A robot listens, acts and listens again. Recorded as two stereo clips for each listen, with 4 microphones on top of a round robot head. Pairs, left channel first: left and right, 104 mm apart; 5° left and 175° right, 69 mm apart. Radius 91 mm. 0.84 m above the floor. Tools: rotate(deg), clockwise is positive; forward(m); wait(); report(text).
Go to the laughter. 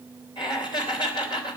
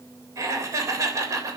rotate(-140)
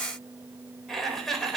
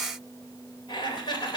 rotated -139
forward(1.0)
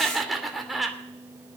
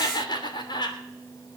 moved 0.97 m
forward(1.0)
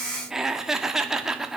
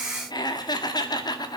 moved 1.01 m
forward(1.0)
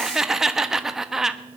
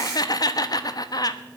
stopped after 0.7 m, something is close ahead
report("I am next to the laughter.")